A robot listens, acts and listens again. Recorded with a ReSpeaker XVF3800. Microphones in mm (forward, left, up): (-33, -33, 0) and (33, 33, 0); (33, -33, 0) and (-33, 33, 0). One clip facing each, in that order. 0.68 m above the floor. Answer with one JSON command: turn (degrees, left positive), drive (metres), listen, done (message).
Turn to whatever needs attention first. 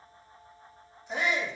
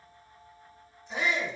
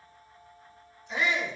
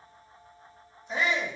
{"turn": -170}
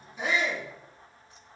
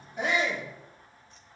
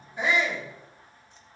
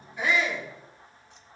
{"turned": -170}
{"turn": 25}
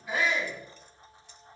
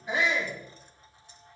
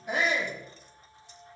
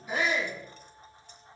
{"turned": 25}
{"turn": -20}
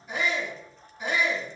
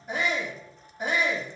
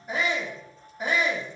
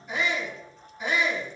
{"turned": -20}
{"done": "Found it: a shout, straight ahead."}